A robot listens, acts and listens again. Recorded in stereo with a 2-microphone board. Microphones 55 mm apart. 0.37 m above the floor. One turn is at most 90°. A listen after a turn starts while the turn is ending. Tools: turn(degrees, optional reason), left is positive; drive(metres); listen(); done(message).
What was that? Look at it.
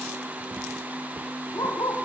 turn(degrees=90)
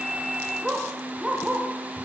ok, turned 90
done("Facing the dog barking.")